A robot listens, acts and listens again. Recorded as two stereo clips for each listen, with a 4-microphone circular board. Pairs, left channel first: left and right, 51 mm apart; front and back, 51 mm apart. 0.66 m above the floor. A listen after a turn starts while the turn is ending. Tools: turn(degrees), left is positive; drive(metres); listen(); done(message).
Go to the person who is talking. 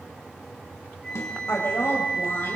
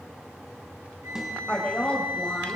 turn(degrees=60)
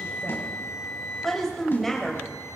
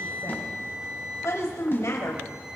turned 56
drive(metres=1.0)
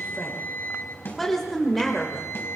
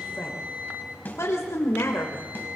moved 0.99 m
drive(metres=1.0)
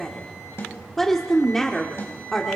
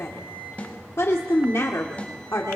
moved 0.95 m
drive(metres=1.0)
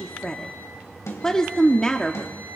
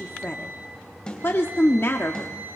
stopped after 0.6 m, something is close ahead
turn(degrees=15)
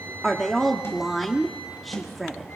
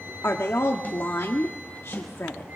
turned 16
done("I am next to the woman speaking.")